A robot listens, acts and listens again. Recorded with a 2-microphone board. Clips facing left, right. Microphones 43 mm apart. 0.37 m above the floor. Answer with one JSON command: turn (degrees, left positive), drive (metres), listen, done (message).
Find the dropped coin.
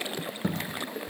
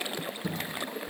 {"turn": 55}
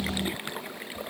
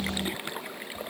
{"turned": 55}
{"listen": true}
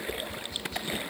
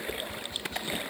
{"done": "I heard a dropped coin, but can't make it out now. It was about straight ahead or 70° left."}